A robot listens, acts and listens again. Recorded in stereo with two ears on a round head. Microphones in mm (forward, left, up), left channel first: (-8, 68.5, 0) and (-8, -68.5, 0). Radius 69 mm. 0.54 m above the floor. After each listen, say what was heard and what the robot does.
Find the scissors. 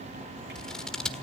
Turn 30° left.
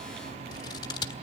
So it is at 145° left. Turn 145° left.
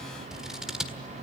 Found it: scissors, straight ahead, 1 to 2 m away.